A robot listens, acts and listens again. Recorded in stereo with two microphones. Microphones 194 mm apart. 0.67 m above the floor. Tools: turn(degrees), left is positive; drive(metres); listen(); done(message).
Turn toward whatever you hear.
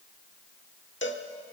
turn(degrees=70)
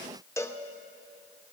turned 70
turn(degrees=15)
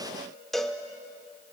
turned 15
done("Facing the cowbell.")